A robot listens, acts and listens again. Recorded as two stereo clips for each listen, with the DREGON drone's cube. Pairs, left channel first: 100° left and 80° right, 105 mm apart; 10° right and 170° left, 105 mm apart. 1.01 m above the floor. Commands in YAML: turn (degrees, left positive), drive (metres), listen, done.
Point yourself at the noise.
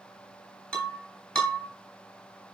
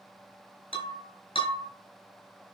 turn: 15
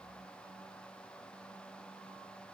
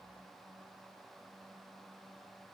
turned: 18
done: "Facing where the breaking glass came from. I can't hear it now."